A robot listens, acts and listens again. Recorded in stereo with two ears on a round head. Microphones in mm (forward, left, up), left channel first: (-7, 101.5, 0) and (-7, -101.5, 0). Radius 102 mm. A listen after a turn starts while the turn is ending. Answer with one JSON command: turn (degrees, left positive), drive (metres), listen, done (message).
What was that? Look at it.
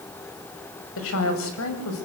{"turn": 70}
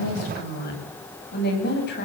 {"turn": 45}
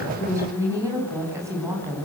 {"turn": -15}
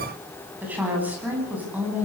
{"turn": -10}
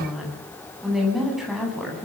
{"done": "Found it: a woman speaking, straight ahead."}